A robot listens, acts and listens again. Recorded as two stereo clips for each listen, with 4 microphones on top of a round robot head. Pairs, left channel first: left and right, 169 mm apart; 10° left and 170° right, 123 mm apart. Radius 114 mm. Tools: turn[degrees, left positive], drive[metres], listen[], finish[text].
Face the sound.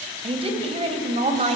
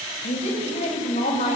Thought: The woman speaking: 45° right.
Action: turn[-45]
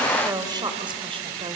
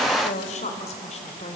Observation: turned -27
Thought: The woman speaking is now 30° right.
Action: turn[-30]
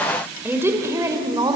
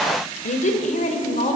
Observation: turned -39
Thought: The woman speaking is now 25° right.
Action: turn[-25]
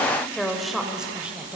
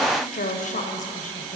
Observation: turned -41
Thought: The woman speaking is now 10° right.
Action: turn[-10]
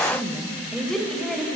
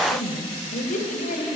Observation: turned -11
Action: finish[Found it: a woman speaking, straight ahead.]